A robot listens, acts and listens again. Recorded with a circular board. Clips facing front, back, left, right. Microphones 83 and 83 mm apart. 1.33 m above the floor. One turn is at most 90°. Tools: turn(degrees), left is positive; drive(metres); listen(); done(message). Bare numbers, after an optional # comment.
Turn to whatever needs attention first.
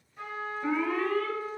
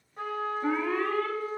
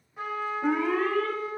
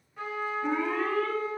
# The alarm: 115° left.
turn(90)
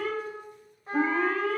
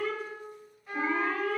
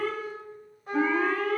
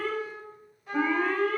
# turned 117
done("Facing the alarm.")